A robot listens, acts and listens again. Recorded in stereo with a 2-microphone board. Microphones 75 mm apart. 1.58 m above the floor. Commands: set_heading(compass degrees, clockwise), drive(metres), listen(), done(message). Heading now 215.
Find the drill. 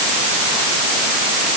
listen()
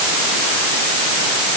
listen()
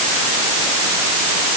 done("I can't make out a drill.")